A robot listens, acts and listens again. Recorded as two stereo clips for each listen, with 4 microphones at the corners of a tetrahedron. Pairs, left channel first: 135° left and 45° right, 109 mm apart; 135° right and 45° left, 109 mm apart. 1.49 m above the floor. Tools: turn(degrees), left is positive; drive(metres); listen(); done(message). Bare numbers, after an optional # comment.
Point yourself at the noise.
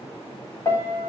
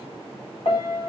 # The piano: 165° right.
turn(-165)
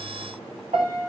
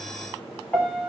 # The piano is now 55° right.
turn(-55)
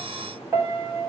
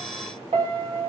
# The piano is now 25° left.
turn(25)
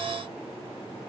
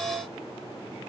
listen()
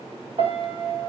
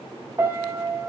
# The piano is now 15° right.
turn(-15)
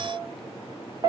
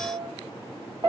done("Facing the piano.")